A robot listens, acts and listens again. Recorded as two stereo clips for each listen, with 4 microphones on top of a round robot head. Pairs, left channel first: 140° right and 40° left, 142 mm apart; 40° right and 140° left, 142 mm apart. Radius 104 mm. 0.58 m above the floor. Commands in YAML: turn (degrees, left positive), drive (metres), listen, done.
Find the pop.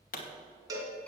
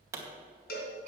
turn: -150
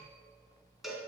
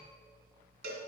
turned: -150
done: "I heard a pop from this way, but can't make it out now."